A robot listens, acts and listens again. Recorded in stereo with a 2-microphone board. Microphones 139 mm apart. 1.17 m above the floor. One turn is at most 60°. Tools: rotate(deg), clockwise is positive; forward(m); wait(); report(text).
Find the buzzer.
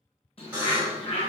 rotate(30)
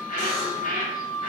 wait()
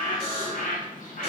rotate(60)
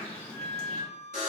rotate(60)
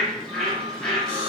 rotate(20)
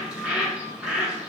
wait()
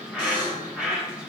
rotate(25)
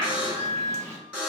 rotate(10)
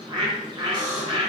report("Found it: a buzzer, straight ahead, 1 to 2 m away.")